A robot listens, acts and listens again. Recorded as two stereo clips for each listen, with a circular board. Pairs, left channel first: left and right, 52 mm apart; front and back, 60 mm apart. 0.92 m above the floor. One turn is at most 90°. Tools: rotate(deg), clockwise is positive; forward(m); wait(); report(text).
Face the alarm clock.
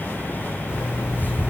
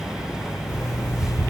rotate(15)
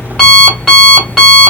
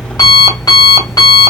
report("Facing the alarm clock.")